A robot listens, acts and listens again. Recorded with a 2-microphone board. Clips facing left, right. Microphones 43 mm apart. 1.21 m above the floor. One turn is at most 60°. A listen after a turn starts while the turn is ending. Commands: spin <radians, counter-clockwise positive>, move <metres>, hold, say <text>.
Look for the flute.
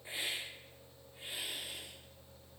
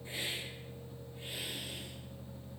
hold
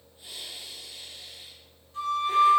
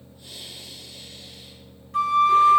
spin -1.05
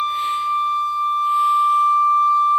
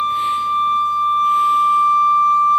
spin -0.79
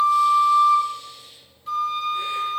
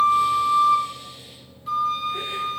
say Facing the flute, 1 to 2 m away.